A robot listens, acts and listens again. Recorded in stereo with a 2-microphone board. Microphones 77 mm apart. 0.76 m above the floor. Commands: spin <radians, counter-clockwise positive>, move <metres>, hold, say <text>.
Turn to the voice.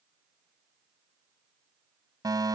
hold
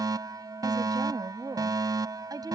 spin -0.96
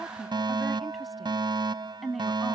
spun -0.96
say Found it: a woman speaking, straight ahead.